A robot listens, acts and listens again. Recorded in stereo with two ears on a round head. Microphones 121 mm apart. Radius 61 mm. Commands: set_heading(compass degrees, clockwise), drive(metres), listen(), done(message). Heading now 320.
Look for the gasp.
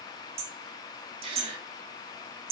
set_heading(5)
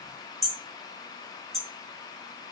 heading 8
listen()
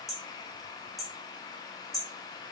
done("I heard a gasp, but can't make it out now. It was about 5° left or 90° right.")